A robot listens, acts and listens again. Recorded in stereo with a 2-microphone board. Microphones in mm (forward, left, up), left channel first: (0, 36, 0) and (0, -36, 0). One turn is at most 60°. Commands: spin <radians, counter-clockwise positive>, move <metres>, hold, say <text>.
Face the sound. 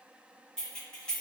spin 0.52
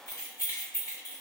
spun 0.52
spin 1.05
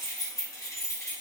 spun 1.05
spin 0.87
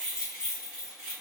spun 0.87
spin -0.17
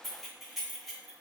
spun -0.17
say Facing the keys jangling, 1 to 2 m away.